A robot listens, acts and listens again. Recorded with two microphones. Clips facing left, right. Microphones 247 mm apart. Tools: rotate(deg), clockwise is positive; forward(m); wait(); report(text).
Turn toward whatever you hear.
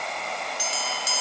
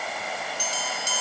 rotate(-30)
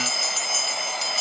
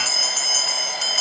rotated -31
rotate(-135)
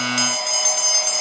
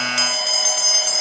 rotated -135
report("Found it: a bell, straight ahead.")